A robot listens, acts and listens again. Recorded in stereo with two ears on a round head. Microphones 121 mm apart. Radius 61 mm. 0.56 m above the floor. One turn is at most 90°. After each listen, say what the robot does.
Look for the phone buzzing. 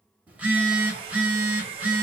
Turn 30° right.
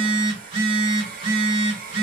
Turn 90° right.
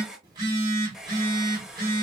Turn 35° right.
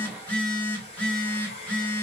Turn 10° left.
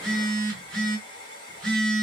Facing the phone buzzing.